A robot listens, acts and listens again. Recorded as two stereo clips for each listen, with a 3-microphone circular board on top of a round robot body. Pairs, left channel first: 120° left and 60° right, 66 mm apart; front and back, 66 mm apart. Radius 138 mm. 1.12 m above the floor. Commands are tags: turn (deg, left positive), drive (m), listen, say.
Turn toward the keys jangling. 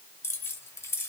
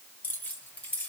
<turn deg="75"/>
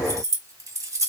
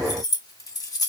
<turn deg="-20"/>
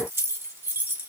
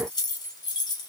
<say>Facing the keys jangling.</say>